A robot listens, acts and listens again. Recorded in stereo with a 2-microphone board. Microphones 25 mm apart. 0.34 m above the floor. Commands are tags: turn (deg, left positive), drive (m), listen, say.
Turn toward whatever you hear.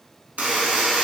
<turn deg="-90"/>
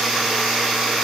<turn deg="-10"/>
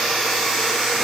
<say>Facing the buzzer.</say>